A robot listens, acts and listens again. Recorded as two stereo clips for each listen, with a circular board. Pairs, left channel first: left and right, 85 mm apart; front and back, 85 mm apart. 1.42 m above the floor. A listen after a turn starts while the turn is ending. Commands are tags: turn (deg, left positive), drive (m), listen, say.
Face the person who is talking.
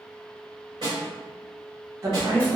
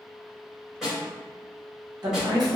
<turn deg="-145"/>
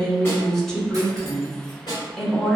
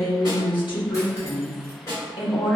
<say>Found it: a woman speaking, straight ahead.</say>